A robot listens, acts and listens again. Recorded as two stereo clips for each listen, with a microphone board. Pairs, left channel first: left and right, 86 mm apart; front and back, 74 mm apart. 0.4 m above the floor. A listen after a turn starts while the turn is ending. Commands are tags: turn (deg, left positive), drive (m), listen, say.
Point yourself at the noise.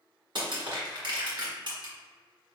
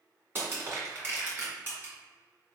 <turn deg="-120"/>
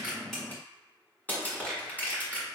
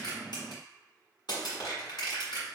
<turn deg="20"/>
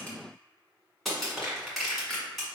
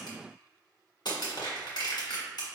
<say>Facing the crushing, 1 to 2 m away.</say>